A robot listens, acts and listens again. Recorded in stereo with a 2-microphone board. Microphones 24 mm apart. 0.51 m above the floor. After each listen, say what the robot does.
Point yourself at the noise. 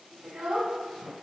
Turn 60° right.
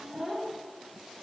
Turn 15° right.
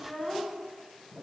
Turn 15° left.
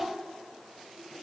Turn 25° left.
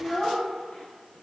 Turn 35° left.
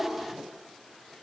Turn 20° left.
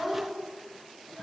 Facing the child speaking, 1 to 2 m away.